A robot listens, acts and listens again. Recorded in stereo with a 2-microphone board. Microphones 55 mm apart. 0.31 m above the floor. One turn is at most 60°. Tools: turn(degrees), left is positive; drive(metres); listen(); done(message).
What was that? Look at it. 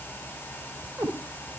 turn(degrees=-60)
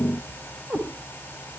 turn(degrees=-30)
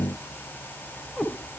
done("Found it: a cat meowing, straight ahead.")